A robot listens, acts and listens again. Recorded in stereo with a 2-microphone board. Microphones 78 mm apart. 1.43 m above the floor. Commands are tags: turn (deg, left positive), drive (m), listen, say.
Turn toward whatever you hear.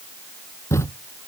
<turn deg="35"/>
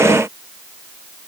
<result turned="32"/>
<listen/>
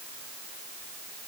<say>I heard a thud, but can't make it out now. It was about 5° left or 110° left.</say>